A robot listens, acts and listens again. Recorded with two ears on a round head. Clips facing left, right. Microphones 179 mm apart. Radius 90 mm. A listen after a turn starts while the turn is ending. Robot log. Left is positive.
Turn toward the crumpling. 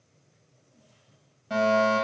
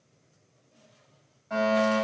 cmd idle
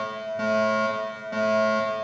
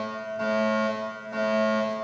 cmd idle
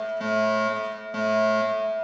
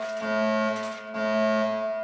end: I can't make out crumpling, only a fire alarm.